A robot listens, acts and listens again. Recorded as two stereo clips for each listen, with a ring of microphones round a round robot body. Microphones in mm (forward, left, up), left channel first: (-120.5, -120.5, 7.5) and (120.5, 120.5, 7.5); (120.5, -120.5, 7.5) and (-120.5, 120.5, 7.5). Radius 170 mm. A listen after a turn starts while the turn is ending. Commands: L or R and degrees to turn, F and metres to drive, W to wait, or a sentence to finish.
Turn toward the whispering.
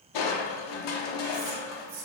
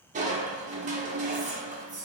L70
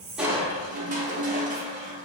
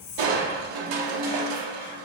W
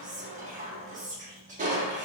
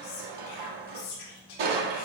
R25
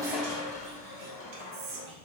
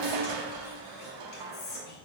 L15
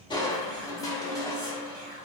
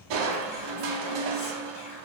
W
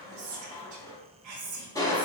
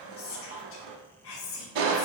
Facing the whispering.